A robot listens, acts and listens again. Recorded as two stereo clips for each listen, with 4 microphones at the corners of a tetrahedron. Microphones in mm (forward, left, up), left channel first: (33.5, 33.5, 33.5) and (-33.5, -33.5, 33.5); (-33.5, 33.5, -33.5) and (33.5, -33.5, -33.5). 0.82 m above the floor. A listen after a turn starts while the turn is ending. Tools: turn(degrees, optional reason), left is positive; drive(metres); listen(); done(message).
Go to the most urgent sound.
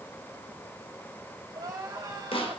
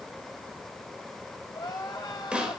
turn(degrees=175, reason="The crying: 175° left.")
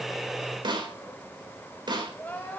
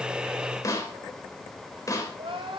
turn(degrees=-30, reason="The crying is now 30° right.")
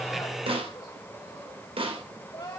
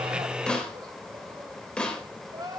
drive(metres=1.0)
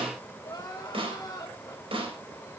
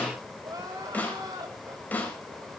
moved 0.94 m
drive(metres=1.0)
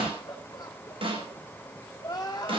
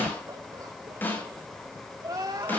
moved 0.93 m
drive(metres=1.0)
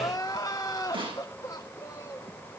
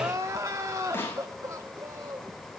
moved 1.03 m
drive(metres=1.0)
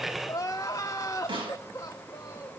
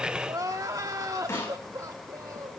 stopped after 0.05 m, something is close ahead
done("I am next to the crying.")